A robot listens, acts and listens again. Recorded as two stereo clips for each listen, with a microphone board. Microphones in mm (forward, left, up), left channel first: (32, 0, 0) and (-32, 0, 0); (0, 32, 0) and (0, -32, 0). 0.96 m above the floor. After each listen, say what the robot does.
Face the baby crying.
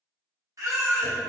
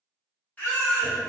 Turn 150° left.
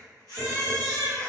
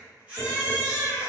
Turn 20° right.
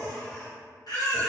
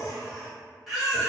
Found it: a baby crying, straight ahead.